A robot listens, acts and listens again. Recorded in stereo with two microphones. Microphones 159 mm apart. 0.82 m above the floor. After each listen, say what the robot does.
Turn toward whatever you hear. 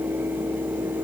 Keep listening.
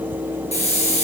Turn 45° left.
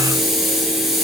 Found it: a hiss, straight ahead, 2 to 4 m away.